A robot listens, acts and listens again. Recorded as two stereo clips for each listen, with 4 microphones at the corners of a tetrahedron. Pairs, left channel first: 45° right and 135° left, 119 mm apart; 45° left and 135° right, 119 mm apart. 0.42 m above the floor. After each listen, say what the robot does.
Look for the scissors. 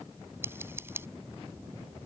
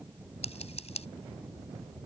Turn 65° left.
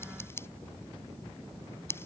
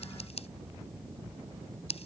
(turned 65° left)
Turn 20° left.
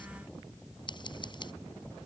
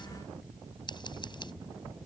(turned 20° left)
Found it: scissors, straight ahead.